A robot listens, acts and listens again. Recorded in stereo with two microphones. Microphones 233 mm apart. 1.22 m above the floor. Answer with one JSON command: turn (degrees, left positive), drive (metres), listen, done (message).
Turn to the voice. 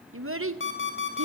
{"turn": -70}
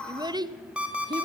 {"turn": -20}
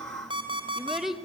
{"done": "Found it: a child speaking, straight ahead, under 1 m away."}